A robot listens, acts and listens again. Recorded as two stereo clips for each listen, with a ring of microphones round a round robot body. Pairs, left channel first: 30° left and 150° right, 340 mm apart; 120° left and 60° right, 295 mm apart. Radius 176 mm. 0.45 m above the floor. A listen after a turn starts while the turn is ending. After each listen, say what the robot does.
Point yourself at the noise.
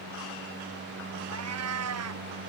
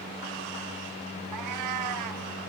Turn 100° right.
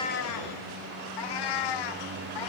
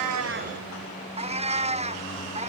Turn 10° left.
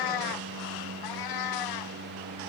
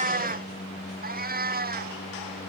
Found it: a cat meowing, straight ahead.